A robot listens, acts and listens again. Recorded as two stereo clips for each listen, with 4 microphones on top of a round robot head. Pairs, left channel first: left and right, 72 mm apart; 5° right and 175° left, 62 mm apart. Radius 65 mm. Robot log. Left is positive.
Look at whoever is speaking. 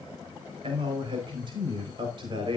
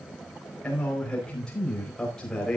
note: The man speaking: 90° right.
cmd yaw -90
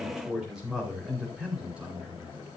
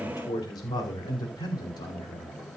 note: The man speaking is now 15° right.
cmd yaw -15
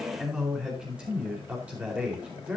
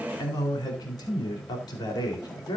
note: The man speaking is now 15° right.
cmd yaw -15
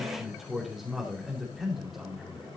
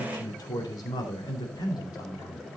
end: Facing the man speaking.